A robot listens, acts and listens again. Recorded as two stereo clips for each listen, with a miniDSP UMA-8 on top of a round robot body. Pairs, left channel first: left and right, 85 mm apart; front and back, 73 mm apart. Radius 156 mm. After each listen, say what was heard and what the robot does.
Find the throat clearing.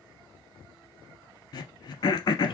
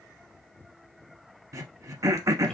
The throat clearing: 135° left. Turn 135° left.
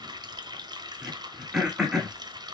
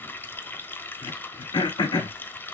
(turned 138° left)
Facing the throat clearing, under 1 m away.